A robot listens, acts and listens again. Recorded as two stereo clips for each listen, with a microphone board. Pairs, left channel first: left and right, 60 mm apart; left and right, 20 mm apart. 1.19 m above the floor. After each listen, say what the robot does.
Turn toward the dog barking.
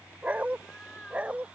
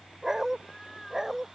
Turn 20° right.
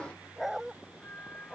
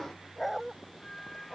Turn 30° right.
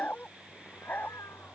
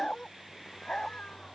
Turn 30° left.
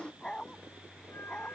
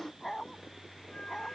Turn 10° left.
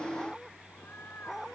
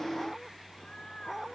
Found it: a dog barking, straight ahead.